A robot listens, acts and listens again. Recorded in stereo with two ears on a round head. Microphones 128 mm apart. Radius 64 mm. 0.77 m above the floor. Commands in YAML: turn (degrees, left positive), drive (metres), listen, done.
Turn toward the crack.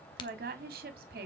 turn: 35
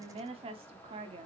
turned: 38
listen: true
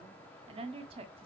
done: "I heard a crack, but can't make it out now. It was about 5° right or 110° left."